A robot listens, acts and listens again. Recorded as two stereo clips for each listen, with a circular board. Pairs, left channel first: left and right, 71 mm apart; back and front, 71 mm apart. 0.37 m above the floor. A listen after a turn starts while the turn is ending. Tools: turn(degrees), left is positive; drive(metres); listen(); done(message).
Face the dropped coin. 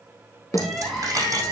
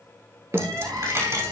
turn(degrees=-45)
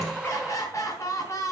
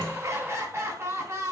done("I heard a dropped coin from this way, but can't make it out now.")